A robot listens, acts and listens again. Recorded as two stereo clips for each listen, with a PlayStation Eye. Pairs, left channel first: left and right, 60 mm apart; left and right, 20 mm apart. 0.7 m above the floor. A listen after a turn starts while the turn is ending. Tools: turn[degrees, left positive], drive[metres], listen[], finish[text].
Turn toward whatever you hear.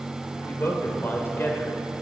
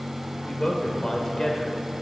Thought: The man speaking: about 35° left or 145° left.
Action: turn[35]
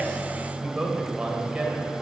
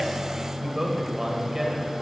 Thought: So it is at 15° right.
Action: turn[-15]
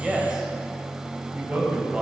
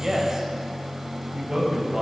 Thought: The man speaking is now 15° right.
Action: turn[-15]
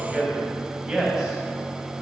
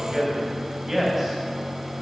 Action: finish[Facing the man speaking, 2 to 4 m away.]